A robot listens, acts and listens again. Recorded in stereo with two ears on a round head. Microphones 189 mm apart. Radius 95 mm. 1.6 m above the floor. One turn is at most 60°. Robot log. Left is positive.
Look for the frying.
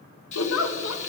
note: The frying: about 35° left or 145° left.
cmd yaw +35
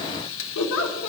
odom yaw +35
note: So it is at 110° left.
cmd yaw +60
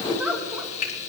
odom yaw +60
note: The frying is now 35° left.
cmd yaw +35
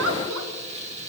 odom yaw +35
note: The frying is now 30° right.
cmd yaw -30
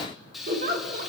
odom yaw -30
end: Facing the frying.